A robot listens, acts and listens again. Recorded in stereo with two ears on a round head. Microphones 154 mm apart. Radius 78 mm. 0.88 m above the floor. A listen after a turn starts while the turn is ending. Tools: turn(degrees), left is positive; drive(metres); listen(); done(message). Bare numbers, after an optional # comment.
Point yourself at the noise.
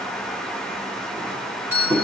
turn(-30)
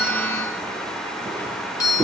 # So it is at 20° left.
turn(20)
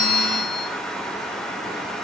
listen()
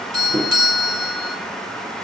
done("Facing the doorbell.")